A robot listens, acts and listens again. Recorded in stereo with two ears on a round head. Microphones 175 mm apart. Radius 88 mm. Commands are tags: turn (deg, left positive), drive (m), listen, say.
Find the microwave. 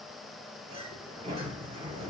<listen/>
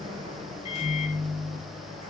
<turn deg="30"/>
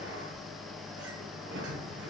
<say>Facing the microwave, under 1 m away.</say>